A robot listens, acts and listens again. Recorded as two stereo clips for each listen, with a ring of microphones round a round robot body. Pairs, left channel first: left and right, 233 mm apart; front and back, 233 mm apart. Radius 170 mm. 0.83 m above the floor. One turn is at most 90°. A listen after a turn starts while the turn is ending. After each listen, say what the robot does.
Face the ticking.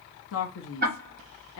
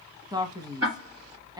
Turn 90° right.
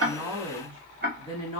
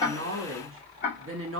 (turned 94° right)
Turn 45° right.
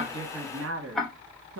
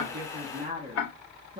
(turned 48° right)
Facing the ticking.